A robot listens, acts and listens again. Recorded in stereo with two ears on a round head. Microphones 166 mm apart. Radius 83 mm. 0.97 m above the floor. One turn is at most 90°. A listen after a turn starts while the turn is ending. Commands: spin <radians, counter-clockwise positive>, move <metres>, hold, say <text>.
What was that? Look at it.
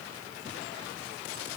hold
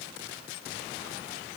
hold
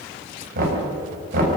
spin -0.87
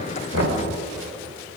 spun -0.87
hold
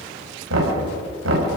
spin -1.31
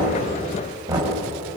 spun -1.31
spin -0.35
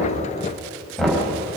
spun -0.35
say Found it: knocking, straight ahead.